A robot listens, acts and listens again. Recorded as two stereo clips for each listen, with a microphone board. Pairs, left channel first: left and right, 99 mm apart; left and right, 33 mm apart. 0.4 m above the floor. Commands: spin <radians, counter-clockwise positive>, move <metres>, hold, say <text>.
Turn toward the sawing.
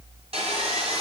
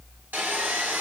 spin -1.57
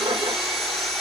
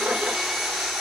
say Found it: sawing, straight ahead, 2 to 4 m away.